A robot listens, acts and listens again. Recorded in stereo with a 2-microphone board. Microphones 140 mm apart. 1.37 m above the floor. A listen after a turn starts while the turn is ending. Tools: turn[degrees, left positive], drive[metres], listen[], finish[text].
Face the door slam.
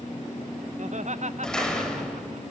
Action: turn[30]
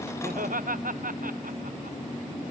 Action: listen[]
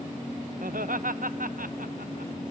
Action: finish[I heard a door slam, but can't make it out now. It was about 25° right or 145° left.]